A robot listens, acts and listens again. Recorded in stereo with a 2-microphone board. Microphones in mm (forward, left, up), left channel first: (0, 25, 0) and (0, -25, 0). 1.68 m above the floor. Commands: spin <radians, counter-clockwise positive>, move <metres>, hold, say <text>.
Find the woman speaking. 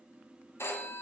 hold
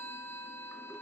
hold
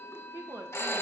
spin -1.57
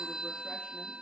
hold
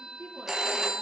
spin 0.61
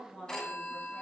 spin 0.35
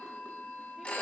hold
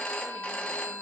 hold
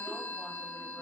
say Facing where the woman speaking came from. I can't hear it now.